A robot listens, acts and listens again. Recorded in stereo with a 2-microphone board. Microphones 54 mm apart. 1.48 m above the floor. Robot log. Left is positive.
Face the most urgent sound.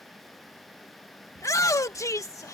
note: The shout: about 70° left or 110° left.
cmd yaw +70
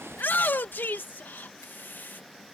note: So it is at 35° left.
cmd yaw +35
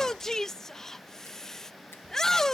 note: The shout is now 10° left.
cmd yaw +10
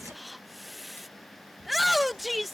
end: Found it: a shout, straight ahead.